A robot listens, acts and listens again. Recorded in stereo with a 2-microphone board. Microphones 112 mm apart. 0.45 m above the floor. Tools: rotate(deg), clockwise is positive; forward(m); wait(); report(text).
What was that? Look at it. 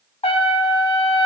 rotate(-70)
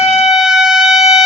report("Found it: a trumpet, straight ahead.")